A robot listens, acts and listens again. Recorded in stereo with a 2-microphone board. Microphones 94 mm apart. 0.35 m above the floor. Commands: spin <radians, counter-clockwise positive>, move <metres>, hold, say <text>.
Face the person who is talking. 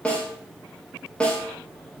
hold
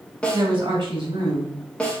spin -0.96
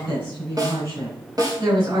spin -1.13
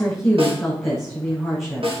say Facing the woman speaking, over 4 m away.